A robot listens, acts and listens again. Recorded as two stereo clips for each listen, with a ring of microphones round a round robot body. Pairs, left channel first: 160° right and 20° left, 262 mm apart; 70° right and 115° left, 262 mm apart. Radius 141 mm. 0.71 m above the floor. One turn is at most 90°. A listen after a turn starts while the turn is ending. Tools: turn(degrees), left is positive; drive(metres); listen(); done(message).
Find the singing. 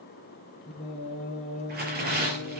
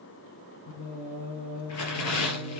turn(degrees=-90)
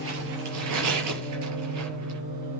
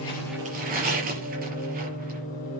done("Facing the singing.")